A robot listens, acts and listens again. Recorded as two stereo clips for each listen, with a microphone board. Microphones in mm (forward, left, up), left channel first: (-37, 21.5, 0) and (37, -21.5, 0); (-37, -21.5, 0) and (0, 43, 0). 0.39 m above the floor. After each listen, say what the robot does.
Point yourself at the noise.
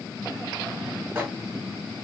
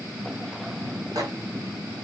Turn 40° left.
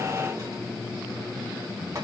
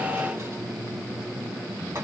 Keep listening.
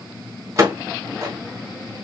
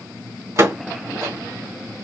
Turn 20° left.
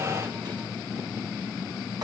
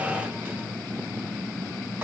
Keep listening.
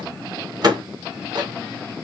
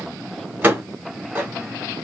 Found it: a microwave, straight ahead.